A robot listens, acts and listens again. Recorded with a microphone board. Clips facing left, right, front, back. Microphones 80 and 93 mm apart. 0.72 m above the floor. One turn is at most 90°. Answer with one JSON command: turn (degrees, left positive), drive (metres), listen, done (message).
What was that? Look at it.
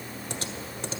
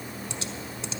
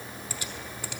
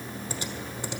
{"turn": 90}
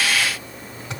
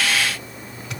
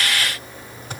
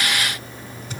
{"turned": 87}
{"turn": 35}
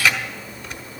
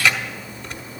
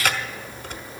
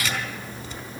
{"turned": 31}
{"done": "Facing the typing on a keyboard, 1 to 2 m away."}